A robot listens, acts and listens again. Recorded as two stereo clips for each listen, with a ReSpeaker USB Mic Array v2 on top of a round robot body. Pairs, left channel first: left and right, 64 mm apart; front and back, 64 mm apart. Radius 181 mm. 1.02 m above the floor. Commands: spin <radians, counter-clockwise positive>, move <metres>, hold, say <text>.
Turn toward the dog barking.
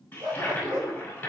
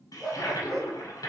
spin -1.66
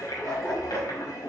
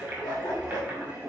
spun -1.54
spin 0.26
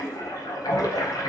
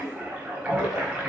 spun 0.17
hold
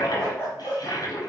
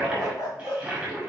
spin 0.52
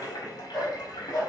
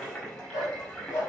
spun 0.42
spin 0.26
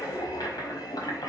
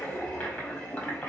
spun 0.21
hold
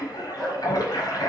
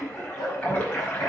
say Facing the dog barking, 2 to 4 m away.